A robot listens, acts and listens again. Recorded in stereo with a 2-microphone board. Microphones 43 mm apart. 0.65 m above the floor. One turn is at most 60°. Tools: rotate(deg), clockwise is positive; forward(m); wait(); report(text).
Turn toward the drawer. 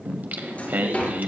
rotate(-35)
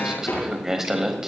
rotate(-60)
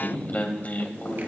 rotate(-45)
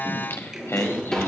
rotate(-10)
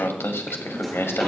wait()
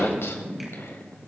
wait()
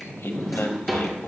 report("Facing the drawer.")